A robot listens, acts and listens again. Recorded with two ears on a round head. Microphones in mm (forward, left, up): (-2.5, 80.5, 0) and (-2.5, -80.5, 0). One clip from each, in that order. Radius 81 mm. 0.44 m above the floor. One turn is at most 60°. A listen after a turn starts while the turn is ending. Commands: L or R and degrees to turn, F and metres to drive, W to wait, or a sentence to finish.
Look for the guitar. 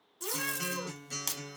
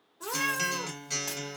R60
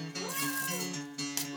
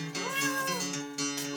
R35
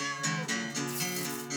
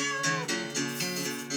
Facing the guitar.